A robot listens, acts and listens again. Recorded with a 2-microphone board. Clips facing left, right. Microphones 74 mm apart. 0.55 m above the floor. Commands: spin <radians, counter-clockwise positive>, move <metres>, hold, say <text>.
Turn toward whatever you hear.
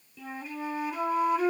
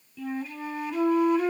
spin 0.52
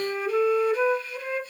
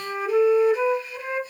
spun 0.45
spin -0.26
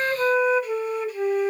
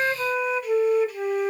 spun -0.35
say Facing the flute.